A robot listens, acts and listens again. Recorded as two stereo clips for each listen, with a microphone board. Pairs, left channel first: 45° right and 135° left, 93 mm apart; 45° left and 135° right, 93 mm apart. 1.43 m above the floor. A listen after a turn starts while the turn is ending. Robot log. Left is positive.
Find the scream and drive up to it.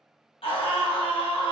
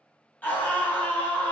note: The scream: 25° right.
cmd yaw -25
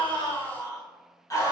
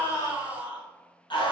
note: The scream is now 10° left.
cmd yaw +10
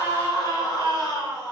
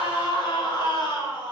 cmd fwd 1.0
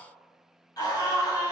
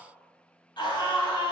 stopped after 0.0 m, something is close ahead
end: Something is in my way. I am facing the scream but have not reached it.